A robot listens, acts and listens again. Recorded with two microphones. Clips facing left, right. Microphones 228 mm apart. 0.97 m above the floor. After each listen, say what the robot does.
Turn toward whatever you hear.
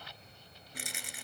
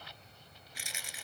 Turn 60° left.
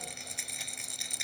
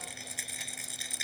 Found it: a rattle, straight ahead.